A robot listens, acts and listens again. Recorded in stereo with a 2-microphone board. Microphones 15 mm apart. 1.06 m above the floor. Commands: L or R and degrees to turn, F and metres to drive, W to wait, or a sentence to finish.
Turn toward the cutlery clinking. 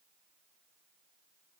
W
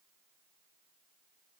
W
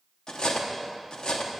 L65
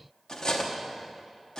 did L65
L45
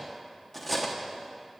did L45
Facing the cutlery clinking.